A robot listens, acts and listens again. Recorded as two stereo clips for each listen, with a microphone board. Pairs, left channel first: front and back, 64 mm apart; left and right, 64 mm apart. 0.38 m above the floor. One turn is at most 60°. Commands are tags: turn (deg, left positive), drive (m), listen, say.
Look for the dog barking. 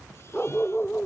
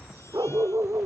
<turn deg="-60"/>
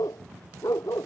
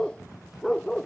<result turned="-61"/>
<turn deg="10"/>
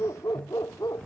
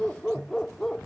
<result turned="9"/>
<turn deg="10"/>
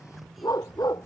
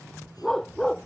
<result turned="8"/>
<turn deg="10"/>
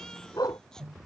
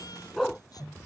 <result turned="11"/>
<say>Found it: a dog barking, straight ahead.</say>